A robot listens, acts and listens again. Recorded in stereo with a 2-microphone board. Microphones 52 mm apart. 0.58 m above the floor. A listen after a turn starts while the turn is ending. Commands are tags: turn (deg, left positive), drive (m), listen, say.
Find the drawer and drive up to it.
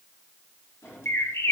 <turn deg="55"/>
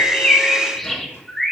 <listen/>
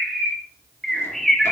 <listen/>
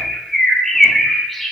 <say>I heard a drawer, but can't make it out now. It was about straight ahead or 70° left. I did not reach it.</say>